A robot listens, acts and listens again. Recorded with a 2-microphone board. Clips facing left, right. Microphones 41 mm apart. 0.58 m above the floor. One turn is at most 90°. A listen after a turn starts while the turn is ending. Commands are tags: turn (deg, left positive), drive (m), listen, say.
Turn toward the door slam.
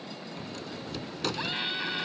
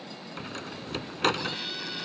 <turn deg="-50"/>
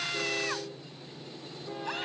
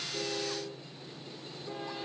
<listen/>
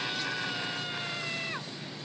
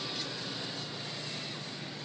<say>I heard a door slam, but can't make it out now. It was about straight ahead or 80° right.</say>